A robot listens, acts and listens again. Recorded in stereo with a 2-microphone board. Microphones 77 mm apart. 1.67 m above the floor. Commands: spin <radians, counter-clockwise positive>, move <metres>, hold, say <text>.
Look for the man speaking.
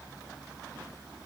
hold
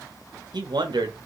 spin -1.13
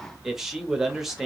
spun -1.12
say Found it: a man speaking, straight ahead, under 1 m away.